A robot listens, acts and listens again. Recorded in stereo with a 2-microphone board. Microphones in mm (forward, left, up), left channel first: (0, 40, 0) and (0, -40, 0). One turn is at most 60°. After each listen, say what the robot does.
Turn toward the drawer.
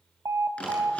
Turn 15° left.
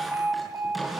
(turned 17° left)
Found it: a drawer, straight ahead, over 4 m away.